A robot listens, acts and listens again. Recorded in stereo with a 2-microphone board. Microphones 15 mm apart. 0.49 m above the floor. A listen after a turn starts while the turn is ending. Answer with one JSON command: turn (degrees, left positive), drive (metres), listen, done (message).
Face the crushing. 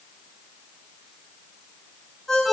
{"listen": true}
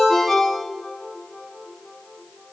{"listen": true}
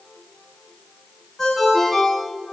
{"done": "I can't make out crushing to turn to."}